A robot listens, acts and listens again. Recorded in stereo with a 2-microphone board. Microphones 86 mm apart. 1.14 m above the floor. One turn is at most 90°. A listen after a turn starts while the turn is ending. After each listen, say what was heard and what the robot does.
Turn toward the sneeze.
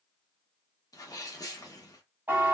The sneeze: about 45° left or 135° left. Turn 45° left.
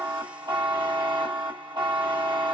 Keep listening.
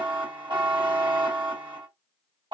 I heard a sneeze, but can't make it out now. It was about straight ahead or 90° left.